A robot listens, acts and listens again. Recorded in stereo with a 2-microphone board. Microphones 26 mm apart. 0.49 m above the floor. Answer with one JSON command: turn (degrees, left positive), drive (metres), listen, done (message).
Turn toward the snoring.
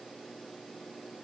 {"listen": true}
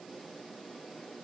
{"listen": true}
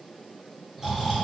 {"turn": -15}
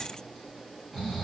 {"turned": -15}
{"done": "Found it: snoring, straight ahead."}